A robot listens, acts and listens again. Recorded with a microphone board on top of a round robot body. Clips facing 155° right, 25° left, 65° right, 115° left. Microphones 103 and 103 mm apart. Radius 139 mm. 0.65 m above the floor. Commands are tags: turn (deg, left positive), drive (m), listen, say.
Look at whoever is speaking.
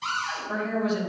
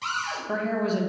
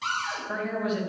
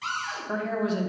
<turn deg="55"/>
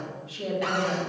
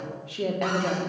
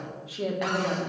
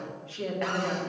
<turn deg="10"/>
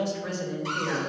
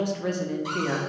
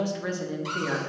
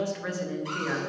<say>Facing the woman speaking.</say>